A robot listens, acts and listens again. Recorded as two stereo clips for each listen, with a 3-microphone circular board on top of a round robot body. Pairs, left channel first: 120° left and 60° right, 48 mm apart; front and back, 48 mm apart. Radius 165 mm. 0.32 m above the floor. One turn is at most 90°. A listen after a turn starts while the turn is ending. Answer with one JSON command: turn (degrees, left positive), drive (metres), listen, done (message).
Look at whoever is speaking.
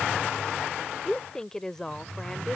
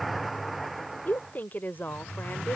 {"turn": 45}
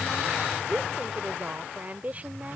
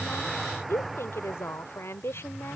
{"done": "Found it: a woman speaking, straight ahead."}